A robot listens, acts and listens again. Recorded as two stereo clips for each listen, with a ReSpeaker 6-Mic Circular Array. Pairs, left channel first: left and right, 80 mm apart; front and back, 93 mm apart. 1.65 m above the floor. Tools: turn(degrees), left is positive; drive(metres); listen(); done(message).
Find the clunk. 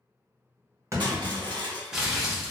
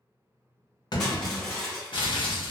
turn(degrees=-35)
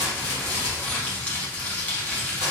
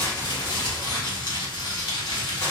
done("I heard a clunk from this way, but can't make it out now.")